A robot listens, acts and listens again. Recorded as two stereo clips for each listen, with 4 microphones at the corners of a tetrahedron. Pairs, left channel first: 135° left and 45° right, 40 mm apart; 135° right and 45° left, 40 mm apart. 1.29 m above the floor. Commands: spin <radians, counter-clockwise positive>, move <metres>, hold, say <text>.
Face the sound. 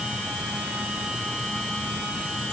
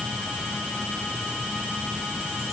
hold
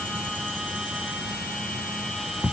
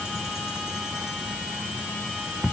hold
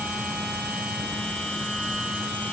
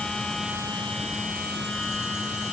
say I can't make out anything.